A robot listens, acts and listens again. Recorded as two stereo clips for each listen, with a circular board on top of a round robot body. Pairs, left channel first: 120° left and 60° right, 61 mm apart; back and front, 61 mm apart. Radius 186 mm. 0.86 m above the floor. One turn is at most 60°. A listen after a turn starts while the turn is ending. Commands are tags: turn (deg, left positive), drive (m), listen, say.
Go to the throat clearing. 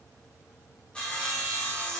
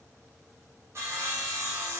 <listen/>
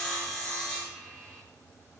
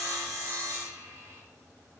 <listen/>
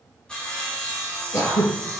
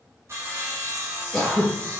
<turn deg="60"/>
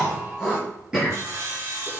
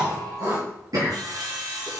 <turn deg="20"/>
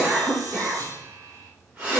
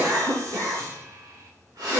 <drive m="1.0"/>
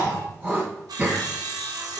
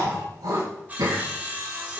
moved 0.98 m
<drive m="1.0"/>
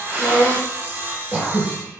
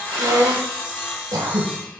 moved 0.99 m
<drive m="1.0"/>
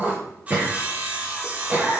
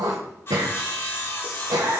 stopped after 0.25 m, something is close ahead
<say>I am next to the throat clearing.</say>